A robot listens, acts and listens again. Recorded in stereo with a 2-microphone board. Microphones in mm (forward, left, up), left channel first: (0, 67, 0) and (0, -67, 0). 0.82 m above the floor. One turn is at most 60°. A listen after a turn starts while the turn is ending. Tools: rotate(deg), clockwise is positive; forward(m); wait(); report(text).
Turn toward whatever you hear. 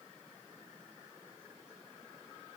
wait()
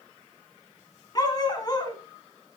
rotate(-30)
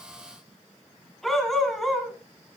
report("Found it: a dog barking, straight ahead, 1 to 2 m away.")